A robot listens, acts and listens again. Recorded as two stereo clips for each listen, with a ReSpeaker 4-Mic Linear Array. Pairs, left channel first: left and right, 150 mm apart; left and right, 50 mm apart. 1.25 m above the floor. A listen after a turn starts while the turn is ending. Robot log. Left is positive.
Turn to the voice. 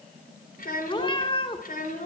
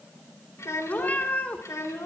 note: The child speaking: about 75° left or 105° left.
cmd yaw +75
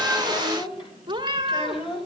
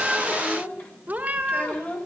note: So it is at 40° left.
cmd yaw +40
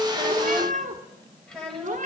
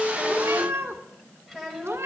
end: Found it: a child speaking, straight ahead.